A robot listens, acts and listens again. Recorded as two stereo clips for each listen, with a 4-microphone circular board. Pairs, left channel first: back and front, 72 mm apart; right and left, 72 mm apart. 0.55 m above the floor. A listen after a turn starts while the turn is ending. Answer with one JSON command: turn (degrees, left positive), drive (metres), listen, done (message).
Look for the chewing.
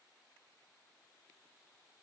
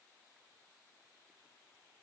{"listen": true}
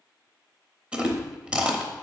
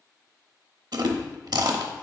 {"turn": 75}
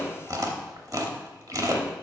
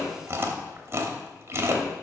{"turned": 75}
{"turn": 35}
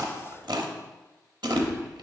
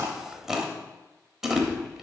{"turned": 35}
{"done": "Facing the chewing, under 1 m away."}